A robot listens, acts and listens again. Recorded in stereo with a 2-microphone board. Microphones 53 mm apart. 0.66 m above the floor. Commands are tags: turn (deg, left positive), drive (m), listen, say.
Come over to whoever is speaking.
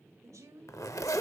<turn deg="-90"/>
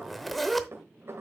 <listen/>
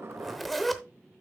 <listen/>
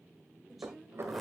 <drive m="1.0"/>
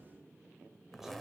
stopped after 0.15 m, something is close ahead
<listen/>
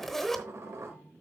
<listen/>
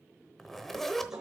<say>Facing where the woman speaking came from. I can't hear it now. I did not reach it.</say>